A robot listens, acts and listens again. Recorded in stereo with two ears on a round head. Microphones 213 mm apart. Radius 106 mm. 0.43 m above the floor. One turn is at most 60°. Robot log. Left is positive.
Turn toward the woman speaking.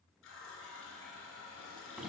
cmd idle
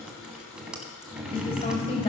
note: The woman speaking: about 25° left or 155° left.
cmd yaw +25
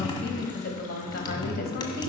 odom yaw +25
note: So it is at 125° left.
cmd yaw +60
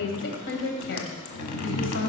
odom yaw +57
note: The woman speaking is now 70° left.
cmd yaw +60
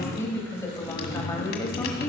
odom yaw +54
note: The woman speaking is now 15° left.
cmd yaw +15
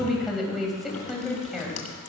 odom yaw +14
end: Facing the woman speaking.